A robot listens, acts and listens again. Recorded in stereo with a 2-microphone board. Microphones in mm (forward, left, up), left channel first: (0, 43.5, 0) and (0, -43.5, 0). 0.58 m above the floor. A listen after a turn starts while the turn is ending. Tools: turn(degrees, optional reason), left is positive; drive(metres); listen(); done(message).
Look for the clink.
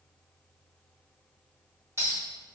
turn(degrees=-35, reason="The clink: about 35° right or 145° right.")
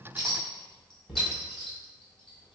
done("Facing the clink.")